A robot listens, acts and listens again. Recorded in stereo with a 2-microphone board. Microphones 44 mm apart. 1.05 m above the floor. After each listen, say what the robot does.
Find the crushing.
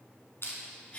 Turn 60° left.
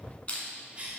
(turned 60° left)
Turn 30° left.
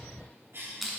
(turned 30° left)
Found it: crushing, straight ahead, 1 to 2 m away.